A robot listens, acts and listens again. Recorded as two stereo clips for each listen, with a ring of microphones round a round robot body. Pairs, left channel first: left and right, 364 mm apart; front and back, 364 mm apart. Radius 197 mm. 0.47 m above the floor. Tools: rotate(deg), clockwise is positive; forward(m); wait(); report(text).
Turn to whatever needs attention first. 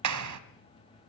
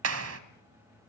wait()
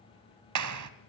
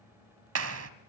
wait()
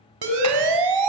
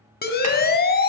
rotate(65)
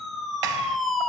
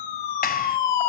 report("Found it: a siren, straight ahead, over 4 m away.")